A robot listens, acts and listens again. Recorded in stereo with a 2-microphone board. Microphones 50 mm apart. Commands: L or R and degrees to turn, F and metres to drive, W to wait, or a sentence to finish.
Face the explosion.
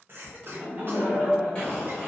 L20
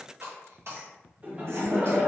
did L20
W
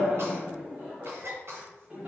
I heard an explosion, but can't make it out now. It was about straight ahead or 140° left.